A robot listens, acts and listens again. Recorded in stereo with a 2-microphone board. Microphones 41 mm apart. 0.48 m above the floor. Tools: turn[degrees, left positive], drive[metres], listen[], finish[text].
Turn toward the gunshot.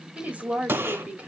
Thought: The gunshot: about 70° right or 110° right.
Action: turn[-70]
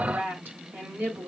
Action: listen[]
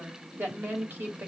Action: finish[I heard a gunshot, but can't make it out now. It was about straight ahead or 40° right.]